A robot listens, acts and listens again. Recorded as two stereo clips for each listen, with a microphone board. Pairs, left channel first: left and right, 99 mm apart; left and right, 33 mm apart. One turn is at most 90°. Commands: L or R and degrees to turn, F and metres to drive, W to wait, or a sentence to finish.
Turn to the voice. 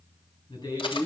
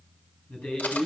L50
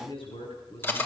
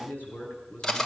L80
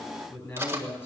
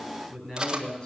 L30
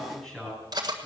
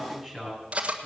L10
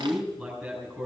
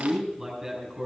Facing the man speaking, over 4 m away.